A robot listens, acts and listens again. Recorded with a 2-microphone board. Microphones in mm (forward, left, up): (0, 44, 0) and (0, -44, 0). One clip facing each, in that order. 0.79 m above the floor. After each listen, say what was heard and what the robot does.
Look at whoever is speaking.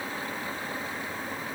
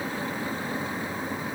Keep listening.
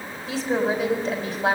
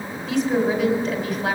The woman speaking: about 35° left or 145° left. Turn 35° left.
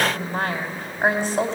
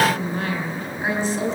So it is at 110° left. Turn 110° left.
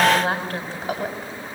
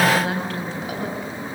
The woman speaking is now 40° left. Turn 40° left.
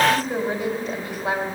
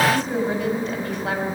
The woman speaking is now 10° left. Turn 10° left.
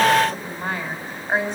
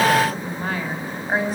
Found it: a woman speaking, straight ahead, over 4 m away.